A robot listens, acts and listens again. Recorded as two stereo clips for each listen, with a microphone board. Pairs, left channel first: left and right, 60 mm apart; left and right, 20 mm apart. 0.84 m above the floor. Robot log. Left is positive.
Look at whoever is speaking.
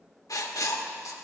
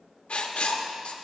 cmd idle
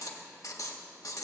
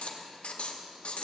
cmd idle
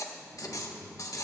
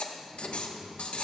cmd yaw -90
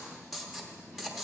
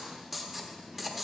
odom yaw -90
note: So it is at 10° left.
cmd yaw +10
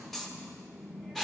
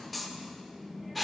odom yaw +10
end: Facing the child speaking, over 4 m away.